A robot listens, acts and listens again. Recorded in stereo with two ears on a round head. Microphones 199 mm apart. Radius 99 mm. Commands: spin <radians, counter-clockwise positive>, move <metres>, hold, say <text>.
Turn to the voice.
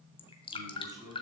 spin -0.26
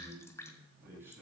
spin -0.52
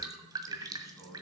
spin 0.26
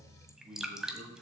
say Facing the man speaking.